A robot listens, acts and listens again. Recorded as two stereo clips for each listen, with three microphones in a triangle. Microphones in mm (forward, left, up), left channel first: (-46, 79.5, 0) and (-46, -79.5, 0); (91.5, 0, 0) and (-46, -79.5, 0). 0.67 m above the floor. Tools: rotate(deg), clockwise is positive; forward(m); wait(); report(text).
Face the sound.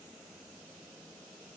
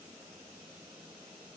wait()
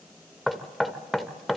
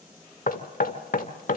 report("Facing the knocking.")